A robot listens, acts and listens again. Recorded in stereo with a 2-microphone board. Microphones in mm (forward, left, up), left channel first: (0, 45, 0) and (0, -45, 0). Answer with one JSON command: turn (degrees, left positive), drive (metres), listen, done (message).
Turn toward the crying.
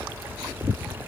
{"listen": true}
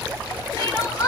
{"turn": 45}
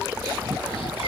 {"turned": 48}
{"listen": true}
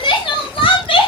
{"turn": 90}
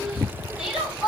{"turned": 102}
{"turn": -10}
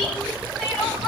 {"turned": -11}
{"done": "Facing the crying."}